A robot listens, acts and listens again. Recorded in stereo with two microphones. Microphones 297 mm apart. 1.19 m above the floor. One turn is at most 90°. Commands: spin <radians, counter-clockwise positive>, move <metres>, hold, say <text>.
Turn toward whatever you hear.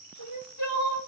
spin 1.22
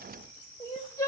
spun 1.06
spin 0.26
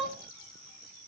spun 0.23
say Facing the crying.